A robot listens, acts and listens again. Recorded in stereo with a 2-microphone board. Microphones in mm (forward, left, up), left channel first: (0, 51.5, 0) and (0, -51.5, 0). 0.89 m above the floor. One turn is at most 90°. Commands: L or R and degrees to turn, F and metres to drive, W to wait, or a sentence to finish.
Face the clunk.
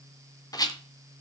W
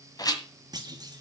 R40
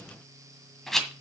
W
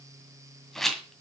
I heard a clunk, but can't make it out now. It was about straight ahead or 100° right.